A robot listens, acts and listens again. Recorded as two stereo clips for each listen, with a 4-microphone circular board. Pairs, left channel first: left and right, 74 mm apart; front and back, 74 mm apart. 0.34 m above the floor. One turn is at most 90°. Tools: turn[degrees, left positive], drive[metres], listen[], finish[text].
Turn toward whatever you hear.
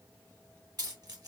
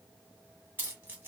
Thought: The keys jangling: 120° right.
Action: turn[-90]
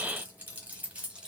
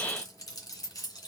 Thought: The keys jangling is now 15° right.
Action: turn[-15]
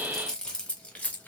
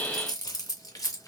Thought: The keys jangling is now 20° left.
Action: turn[20]
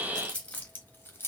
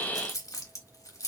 Thought: The keys jangling is now 35° left.
Action: turn[35]
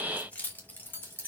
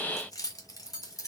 Thought: The keys jangling is now 30° left.
Action: turn[30]
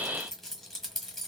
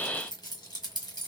Action: finish[Found it: keys jangling, straight ahead.]